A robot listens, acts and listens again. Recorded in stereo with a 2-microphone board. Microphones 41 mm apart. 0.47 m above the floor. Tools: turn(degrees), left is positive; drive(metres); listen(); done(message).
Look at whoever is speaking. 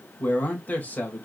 turn(degrees=45)
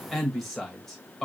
done("Found it: a man speaking, straight ahead, 1 to 2 m away.")